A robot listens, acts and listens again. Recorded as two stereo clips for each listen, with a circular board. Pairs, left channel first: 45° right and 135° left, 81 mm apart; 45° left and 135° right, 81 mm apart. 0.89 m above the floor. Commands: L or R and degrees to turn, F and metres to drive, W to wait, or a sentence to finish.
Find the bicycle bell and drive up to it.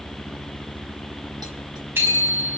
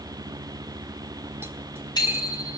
L70
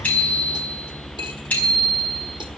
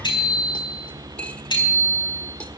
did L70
L25
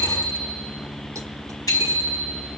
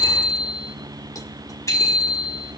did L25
F1.0
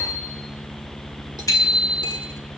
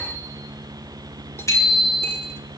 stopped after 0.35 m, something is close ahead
Something is in my way. I am facing the bicycle bell but have not reached it.